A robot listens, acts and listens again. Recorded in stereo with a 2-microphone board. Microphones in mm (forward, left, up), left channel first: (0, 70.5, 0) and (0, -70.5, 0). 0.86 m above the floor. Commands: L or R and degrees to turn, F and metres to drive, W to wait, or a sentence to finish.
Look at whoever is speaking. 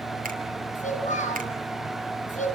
L60
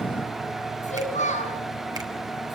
L60
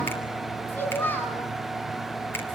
L15
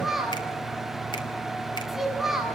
Facing the child speaking, over 4 m away.